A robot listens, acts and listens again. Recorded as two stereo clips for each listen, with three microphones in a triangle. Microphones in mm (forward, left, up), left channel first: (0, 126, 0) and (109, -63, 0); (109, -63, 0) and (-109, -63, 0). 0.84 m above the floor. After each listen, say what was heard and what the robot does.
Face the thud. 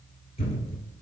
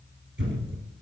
The thud: 175° left. Turn 175° left.
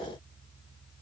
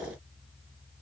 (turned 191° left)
Nothing new. It was at 15° right. Turn 15° right.
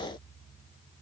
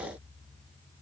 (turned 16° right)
I heard a thud from this way, but can't make it out now.